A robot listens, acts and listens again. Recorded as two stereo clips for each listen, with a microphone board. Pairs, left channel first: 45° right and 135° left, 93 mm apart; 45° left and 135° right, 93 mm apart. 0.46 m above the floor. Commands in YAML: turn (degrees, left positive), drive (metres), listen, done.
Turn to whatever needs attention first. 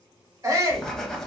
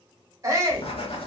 turn: 180
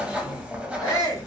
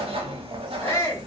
turn: -10
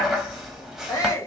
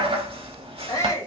done: "Facing the shout, 1 to 2 m away."